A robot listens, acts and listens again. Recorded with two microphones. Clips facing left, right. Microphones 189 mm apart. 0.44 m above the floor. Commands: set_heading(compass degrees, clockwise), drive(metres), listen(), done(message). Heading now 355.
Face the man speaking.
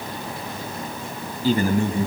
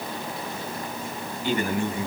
set_heading(320)
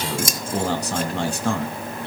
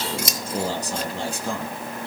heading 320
set_heading(210)
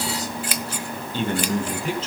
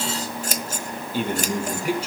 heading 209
set_heading(219)
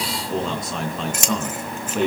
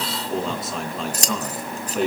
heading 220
done("Found it: a man speaking, straight ahead, over 4 m away.")